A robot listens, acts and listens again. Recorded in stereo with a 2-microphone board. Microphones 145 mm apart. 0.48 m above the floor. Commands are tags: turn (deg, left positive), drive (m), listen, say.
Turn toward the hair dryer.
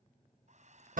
<turn deg="-55"/>
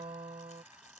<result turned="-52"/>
<listen/>
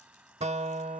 <turn deg="-10"/>
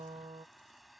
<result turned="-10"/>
<say>Found it: a hair dryer, straight ahead.</say>